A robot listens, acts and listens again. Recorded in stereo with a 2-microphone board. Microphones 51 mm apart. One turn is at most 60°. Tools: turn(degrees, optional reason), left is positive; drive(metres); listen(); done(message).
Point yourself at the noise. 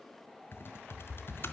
turn(degrees=50, reason="The typing on a keyboard: about 50° left or 130° left.")
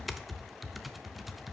done("Found it: typing on a keyboard, straight ahead, under 1 m away.")